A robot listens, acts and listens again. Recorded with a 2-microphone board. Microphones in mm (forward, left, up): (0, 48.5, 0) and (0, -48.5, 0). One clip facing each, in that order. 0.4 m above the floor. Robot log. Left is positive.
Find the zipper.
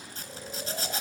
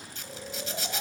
note: The zipper: about 45° left or 135° left.
cmd yaw +45
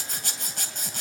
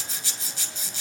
note: So it is at 85° left.
cmd yaw +85
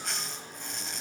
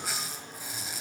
end: Facing the zipper.